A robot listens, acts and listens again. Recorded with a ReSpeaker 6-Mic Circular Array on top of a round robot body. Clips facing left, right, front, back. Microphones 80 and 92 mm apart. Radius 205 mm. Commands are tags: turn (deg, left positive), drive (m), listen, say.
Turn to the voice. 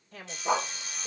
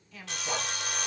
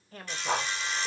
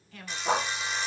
<turn deg="50"/>
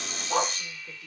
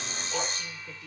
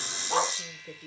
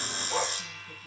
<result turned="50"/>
<listen/>
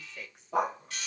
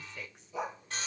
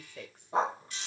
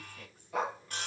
<say>Facing the woman speaking.</say>